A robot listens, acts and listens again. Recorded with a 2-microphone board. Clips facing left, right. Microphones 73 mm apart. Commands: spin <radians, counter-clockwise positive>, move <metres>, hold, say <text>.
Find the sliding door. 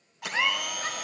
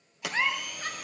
spin -1.22
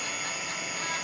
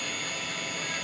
hold
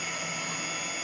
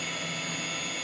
hold
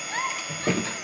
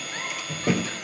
say Found it: a sliding door, straight ahead.